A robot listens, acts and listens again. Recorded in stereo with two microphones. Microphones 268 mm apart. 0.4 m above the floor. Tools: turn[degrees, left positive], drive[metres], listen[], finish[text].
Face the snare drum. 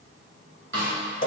Thought: The snare drum: about 45° right or 135° right.
Action: turn[-45]
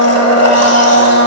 Action: listen[]
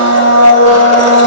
Action: listen[]
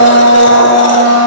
Action: finish[I heard a snare drum, but can't make it out now. It was about straight ahead or 90° right.]